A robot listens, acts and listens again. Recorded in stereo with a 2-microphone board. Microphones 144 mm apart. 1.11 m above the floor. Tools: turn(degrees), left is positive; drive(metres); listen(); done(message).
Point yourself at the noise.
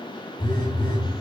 turn(degrees=35)
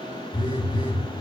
turn(degrees=105)
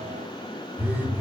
turn(degrees=-15)
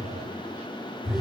done("Found it: a phone buzzing, straight ahead, 1 to 2 m away.")